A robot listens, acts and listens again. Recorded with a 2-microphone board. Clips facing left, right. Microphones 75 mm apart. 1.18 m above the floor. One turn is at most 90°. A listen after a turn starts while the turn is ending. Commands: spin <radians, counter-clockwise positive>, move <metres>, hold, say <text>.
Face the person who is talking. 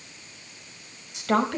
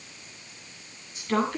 spin 1.57
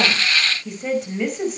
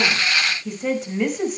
say Found it: a woman speaking, straight ahead.